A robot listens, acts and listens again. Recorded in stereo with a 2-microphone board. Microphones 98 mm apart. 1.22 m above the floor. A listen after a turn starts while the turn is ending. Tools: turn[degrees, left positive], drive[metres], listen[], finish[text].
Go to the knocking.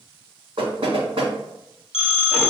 Thought: The knocking: about 60° right or 120° right.
Action: turn[-60]
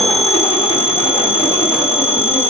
Action: listen[]
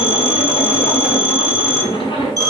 Action: listen[]
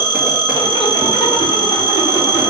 Action: finish[I heard knocking, but can't make it out now. It was about straight ahead or 60° right. I did not reach it.]